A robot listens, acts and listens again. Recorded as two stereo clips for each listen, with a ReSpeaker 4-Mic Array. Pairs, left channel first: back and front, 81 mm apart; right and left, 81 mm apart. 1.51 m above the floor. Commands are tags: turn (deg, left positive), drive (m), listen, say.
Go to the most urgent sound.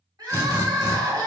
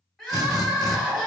<drive m="1.0"/>
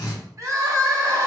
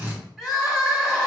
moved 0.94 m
<drive m="1.0"/>
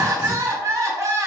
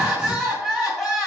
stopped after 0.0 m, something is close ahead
<say>I am next to the crying.</say>